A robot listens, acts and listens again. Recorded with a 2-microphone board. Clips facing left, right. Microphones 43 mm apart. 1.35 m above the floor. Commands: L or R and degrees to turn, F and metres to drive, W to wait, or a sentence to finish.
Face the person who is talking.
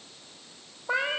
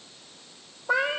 W
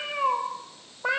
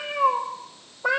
W
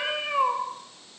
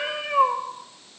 I can't make out anyone speaking, only a cat meowing.